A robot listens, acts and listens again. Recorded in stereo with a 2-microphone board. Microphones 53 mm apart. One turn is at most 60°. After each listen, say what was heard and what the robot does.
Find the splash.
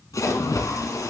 The splash: about 75° left or 105° left. Turn 60° left.
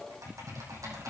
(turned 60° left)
Keep listening.
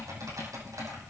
I heard a splash, but can't make it out now. It was about 15° left or 45° left.